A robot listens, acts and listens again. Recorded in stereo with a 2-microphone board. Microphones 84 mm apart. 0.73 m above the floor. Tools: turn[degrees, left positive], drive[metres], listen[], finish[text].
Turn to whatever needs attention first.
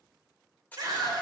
Thought: The scream: about 50° right or 130° right.
Action: turn[-50]
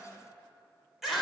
Action: finish[Found it: a scream, straight ahead.]